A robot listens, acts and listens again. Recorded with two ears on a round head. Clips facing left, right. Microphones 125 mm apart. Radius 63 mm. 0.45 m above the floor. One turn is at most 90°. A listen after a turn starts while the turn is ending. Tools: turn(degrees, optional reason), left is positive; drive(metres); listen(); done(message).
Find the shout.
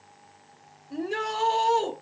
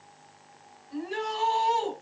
turn(degrees=55, reason="The shout: about 55° left or 125° left.")
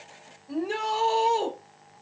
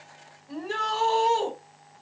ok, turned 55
turn(degrees=15, reason="So it is at 15° left.")
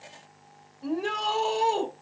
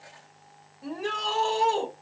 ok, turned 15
done("Found it: a shout, straight ahead, 1 to 2 m away.")